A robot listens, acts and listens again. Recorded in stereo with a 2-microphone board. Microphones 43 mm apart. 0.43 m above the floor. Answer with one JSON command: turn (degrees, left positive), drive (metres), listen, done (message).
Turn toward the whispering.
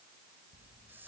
{"turn": -50}
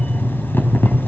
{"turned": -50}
{"listen": true}
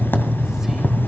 {"listen": true}
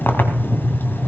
{"done": "I heard whispering, but can't make it out now. It was about straight ahead or 80° right."}